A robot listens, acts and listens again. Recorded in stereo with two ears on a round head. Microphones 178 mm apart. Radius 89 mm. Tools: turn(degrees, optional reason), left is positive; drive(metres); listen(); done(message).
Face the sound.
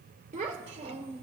turn(degrees=-30, reason="The child speaking: about 30° right or 150° right.")
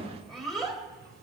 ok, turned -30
done("Facing the child speaking.")